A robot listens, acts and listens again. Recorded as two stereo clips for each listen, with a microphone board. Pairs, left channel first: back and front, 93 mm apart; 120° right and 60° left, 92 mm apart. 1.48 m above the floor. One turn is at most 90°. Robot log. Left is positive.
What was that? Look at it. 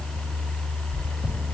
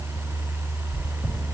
note: The chewing: 145° left.
cmd yaw +90
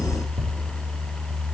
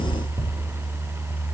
note: The chewing is now 45° left.
cmd yaw +45
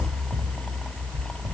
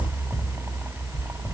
note: The chewing is now 10° right.
cmd yaw -10
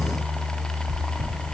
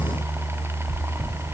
end: Facing the chewing.